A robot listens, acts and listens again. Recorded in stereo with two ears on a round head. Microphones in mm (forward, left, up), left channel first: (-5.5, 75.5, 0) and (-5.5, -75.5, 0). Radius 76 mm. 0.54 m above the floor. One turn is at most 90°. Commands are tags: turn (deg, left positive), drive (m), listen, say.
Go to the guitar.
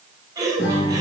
<turn deg="90"/>
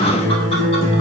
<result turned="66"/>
<turn deg="40"/>
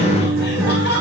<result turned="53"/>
<turn deg="-15"/>
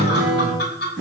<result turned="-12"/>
<drive m="1.0"/>
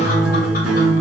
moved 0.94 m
<drive m="1.0"/>
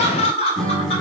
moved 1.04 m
<drive m="1.0"/>
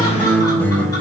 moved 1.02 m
<turn deg="10"/>
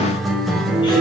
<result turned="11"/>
<drive m="1.0"/>
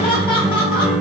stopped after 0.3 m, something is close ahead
<say>I am next to the guitar.</say>